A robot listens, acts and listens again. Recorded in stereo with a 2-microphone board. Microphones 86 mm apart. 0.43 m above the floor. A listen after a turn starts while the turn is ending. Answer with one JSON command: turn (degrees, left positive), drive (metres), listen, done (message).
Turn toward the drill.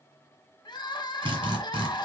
{"turn": -90}
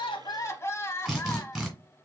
{"done": "Found it: a drill, straight ahead."}